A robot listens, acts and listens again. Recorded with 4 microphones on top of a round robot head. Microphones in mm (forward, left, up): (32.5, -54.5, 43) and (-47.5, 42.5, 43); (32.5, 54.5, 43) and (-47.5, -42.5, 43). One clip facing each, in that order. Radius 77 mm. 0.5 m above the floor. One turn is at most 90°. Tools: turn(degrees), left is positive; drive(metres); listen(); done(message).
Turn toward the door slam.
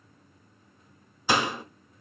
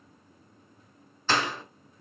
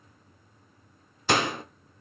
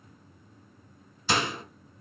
turn(degrees=25)
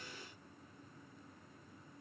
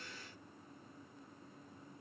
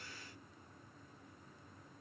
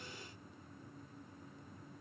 done("Facing where the door slam came from. I can't hear it now.")